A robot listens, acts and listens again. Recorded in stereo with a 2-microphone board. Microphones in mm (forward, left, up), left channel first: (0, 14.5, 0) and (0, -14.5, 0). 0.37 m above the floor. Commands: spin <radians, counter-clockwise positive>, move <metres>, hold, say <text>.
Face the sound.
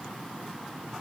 hold
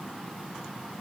hold
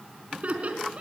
spin -0.87
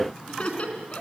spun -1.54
spin 0.79
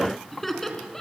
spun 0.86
spin 0.17
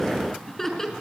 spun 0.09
spin 0.17
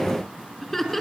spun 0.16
say Facing the laughter.